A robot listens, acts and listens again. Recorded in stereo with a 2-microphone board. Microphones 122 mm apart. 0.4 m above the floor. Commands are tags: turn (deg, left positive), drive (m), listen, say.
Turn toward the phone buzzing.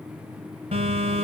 <turn deg="-65"/>
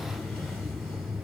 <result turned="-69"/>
<say>Found it: a phone buzzing, straight ahead.</say>